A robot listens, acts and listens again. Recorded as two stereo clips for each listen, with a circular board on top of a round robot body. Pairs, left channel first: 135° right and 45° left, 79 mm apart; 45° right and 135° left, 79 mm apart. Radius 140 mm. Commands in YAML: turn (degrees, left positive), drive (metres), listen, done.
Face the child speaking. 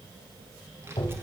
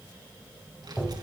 turn: 105
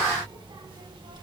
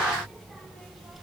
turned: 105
turn: 50
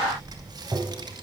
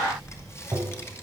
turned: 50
turn: 15
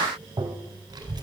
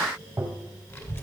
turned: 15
turn: 15
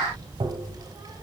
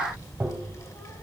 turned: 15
done: "Facing the child speaking."